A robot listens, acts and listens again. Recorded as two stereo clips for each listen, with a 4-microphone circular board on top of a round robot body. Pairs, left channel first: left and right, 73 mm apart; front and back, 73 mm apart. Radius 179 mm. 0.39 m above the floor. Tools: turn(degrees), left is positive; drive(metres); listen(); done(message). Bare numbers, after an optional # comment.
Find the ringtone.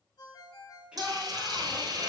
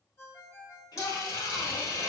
# The ringtone: 60° left.
turn(60)
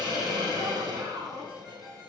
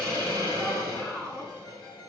listen()
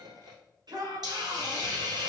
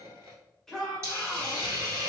listen()
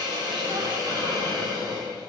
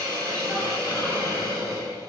done("I heard a ringtone from this way, but can't make it out now.")